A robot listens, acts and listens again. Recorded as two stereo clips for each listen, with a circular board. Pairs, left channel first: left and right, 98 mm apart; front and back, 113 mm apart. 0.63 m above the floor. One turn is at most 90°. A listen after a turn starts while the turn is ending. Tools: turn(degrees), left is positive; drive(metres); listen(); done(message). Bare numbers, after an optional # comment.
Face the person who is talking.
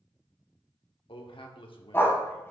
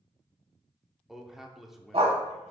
# The man speaking: 95° left.
turn(90)
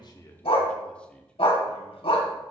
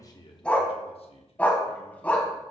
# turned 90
# The man speaking is now 15° left.
turn(15)
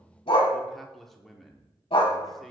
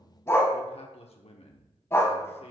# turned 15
done("Facing the man speaking.")